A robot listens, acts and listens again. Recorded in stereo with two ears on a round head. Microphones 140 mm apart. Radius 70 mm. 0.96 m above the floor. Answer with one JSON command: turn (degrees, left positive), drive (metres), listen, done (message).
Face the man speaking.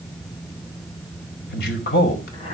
{"turn": 70}
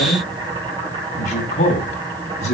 {"turn": 45}
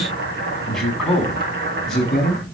{"done": "Found it: a man speaking, straight ahead."}